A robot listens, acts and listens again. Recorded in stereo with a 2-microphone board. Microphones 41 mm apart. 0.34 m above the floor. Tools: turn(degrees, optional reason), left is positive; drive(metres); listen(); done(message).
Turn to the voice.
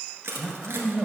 turn(degrees=-15, reason="The man speaking: about 15° right or 165° right.")
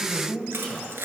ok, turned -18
done("Facing the man speaking.")